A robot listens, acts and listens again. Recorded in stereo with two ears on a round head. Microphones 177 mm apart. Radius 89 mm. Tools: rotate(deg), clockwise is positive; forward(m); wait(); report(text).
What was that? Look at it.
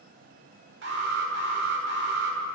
rotate(60)
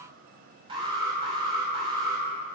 rotate(30)
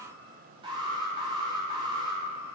rotate(30)
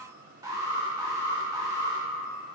rotate(20)
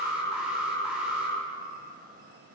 report("Facing the alarm.")